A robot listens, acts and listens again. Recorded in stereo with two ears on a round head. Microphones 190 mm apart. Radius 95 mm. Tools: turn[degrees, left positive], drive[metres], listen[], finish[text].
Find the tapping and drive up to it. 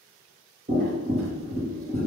Thought: The tapping: about 40° right or 140° right.
Action: turn[-40]
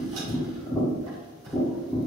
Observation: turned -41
Action: drive[1.0]
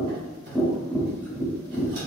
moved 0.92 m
Action: drive[1.0]
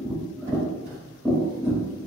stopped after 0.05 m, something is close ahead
Action: finish[Arrived at the tapping, straight ahead.]